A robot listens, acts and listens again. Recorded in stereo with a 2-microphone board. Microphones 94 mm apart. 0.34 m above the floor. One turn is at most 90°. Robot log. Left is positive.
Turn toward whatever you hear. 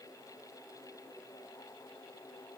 cmd idle
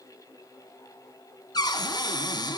note: The cupboard door: about 45° left or 135° left.
cmd yaw +45
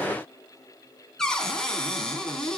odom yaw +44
end: Found it: a cupboard door, straight ahead, 2 to 4 m away.